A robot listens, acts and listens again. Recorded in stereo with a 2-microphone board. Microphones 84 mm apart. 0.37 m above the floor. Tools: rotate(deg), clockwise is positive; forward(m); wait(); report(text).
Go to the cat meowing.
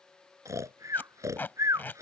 wait()
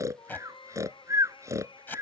rotate(-90)
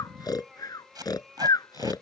forward(1.0)
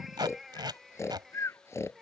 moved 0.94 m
forward(1.0)
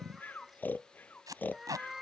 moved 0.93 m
forward(1.0)
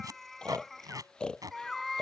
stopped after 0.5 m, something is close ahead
report("I am next to the cat meowing.")